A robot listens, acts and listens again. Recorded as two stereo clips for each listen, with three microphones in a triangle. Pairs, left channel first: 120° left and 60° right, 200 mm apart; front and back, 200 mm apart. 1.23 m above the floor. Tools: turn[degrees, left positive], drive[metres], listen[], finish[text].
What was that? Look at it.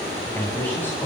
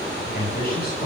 Thought: The man speaking: 40° left.
Action: turn[40]
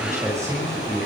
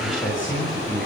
Thought: The man speaking is now 15° left.
Action: turn[15]
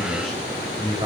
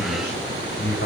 Action: finish[Found it: a man speaking, straight ahead, over 4 m away.]